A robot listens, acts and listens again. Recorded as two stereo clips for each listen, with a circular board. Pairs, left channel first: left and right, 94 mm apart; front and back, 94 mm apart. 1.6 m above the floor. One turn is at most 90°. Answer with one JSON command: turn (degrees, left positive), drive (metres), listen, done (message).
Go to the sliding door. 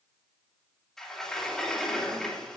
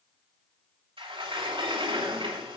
{"turn": 90}
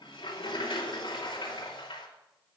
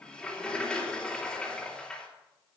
{"turn": 80}
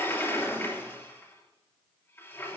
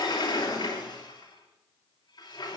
{"turn": 30}
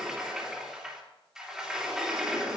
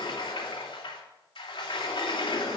{"drive": 1.0}
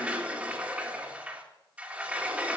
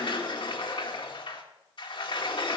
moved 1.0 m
{"turn": -15}
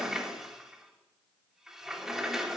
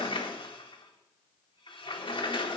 {"drive": 1.0}
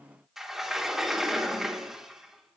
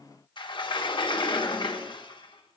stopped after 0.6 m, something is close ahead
{"done": "I am next to the sliding door."}